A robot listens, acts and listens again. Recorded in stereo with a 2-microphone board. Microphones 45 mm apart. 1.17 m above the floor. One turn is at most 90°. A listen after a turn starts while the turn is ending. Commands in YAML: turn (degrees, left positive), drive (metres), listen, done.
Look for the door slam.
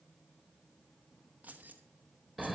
listen: true
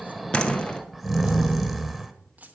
turn: 20
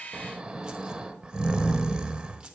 listen: true
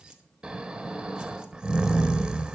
done: "I heard a door slam, but can't make it out now. It was about straight ahead or 140° left."